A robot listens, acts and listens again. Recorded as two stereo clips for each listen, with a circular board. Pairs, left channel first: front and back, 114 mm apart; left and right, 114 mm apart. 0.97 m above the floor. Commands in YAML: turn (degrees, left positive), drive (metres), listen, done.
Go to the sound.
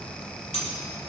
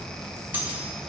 turn: -15
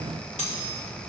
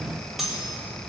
drive: 1.0
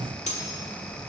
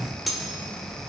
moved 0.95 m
drive: 1.0
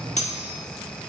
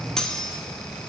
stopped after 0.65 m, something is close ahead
done: "Arrived at the cutlery clinking, straight ahead."